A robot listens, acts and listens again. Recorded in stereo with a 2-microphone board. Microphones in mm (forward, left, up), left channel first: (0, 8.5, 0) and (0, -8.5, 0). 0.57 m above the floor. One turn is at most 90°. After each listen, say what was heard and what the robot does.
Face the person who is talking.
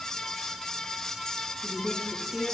The woman speaking: about 40° right or 140° right. Turn 40° right.
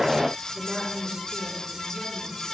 So it is at 110° right. Turn 90° right.
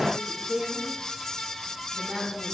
The woman speaking is now 40° right. Turn 40° right.
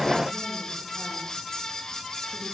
Keep listening.
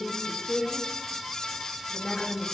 Found it: a woman speaking, straight ahead, over 4 m away.